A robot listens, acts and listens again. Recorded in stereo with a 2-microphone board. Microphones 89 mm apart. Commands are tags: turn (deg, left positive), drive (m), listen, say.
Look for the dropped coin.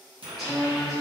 <turn deg="-90"/>
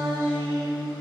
<say>I heard a dropped coin from this way, but can't make it out now.</say>